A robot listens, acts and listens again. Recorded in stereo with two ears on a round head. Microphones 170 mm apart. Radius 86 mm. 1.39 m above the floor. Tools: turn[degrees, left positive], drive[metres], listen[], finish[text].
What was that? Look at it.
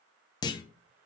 Thought: The clunk: about 25° left or 155° left.
Action: turn[25]
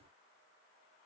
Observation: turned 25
Action: listen[]
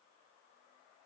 Action: finish[I heard a clunk, but can't make it out now. It was about straight ahead or 130° left.]